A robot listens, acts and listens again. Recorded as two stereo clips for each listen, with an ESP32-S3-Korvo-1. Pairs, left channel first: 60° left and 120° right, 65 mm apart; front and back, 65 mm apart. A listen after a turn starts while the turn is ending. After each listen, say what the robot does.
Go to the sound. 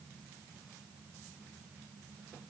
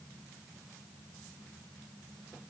Keep listening.
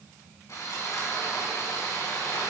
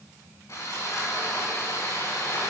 Turn 30° left.
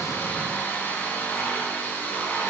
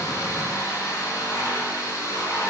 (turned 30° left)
Drive 1.0 m forward.
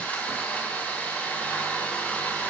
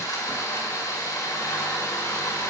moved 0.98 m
Drive 1.0 m forward.
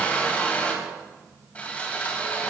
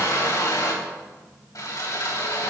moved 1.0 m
Drive 1.0 m forward.
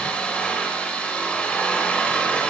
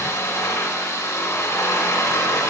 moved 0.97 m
Drive 1.0 m forward.
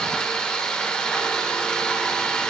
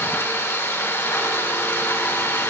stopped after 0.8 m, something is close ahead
Turn 10° right.
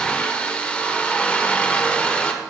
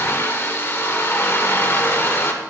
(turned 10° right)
Arrived at the sawing, straight ahead.